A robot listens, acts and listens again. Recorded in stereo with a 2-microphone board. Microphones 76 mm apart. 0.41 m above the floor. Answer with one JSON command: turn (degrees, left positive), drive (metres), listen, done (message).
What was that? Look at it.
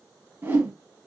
{"turn": -30}
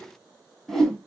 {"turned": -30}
{"done": "Found it: a whoosh, straight ahead."}